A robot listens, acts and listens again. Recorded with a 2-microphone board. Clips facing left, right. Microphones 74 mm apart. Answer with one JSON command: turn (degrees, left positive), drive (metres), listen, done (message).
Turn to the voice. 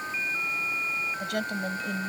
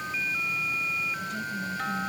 {"turn": 90}
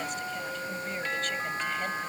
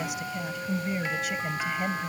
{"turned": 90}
{"turn": -10}
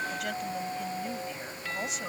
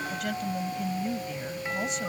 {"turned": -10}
{"done": "Found it: a woman speaking, straight ahead."}